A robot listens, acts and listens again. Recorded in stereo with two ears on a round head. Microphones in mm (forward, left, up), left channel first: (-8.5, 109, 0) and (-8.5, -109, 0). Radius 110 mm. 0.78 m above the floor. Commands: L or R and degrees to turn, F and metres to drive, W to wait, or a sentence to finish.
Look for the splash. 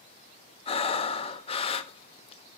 W
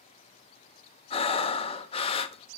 W
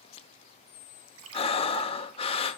R65
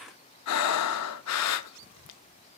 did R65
W
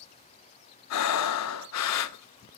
I heard a splash, but can't make it out now. It was about straight ahead or 50° right.